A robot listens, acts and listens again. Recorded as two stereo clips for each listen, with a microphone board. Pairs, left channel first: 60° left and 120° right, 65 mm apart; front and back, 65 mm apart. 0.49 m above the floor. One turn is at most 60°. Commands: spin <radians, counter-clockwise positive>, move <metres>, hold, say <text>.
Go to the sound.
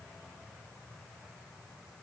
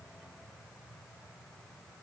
hold
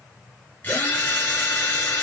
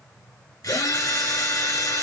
spin 0.17
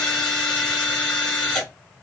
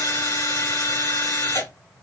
move 1.0
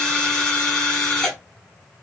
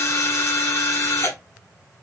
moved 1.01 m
spin -0.17
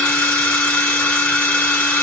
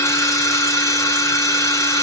move 1.0
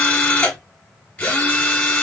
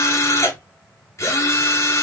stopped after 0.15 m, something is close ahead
spin 0.17
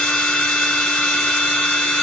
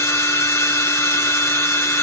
say I am next to the drill.